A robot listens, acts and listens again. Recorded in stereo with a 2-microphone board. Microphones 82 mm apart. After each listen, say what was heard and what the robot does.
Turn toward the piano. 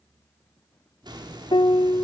The piano: about 70° left or 110° left. Turn 70° left.
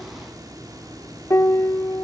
So it is at 35° left. Turn 35° left.
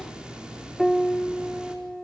Facing the piano.